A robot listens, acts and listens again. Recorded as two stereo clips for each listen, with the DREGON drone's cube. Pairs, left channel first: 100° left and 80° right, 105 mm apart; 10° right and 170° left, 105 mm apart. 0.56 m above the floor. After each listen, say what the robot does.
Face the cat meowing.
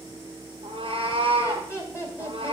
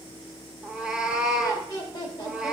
Turn 105° right.
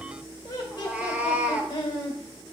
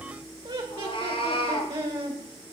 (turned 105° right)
Found it: a cat meowing, straight ahead.